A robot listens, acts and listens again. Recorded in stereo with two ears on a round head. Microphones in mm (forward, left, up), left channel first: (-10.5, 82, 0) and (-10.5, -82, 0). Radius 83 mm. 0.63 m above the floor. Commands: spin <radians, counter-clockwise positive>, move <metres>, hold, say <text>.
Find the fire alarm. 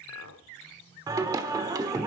hold
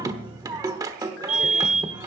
spin -0.79
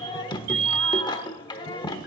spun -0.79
spin -1.57
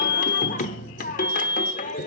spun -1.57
spin 0.35
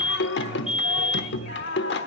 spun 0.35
say Facing the fire alarm, over 4 m away.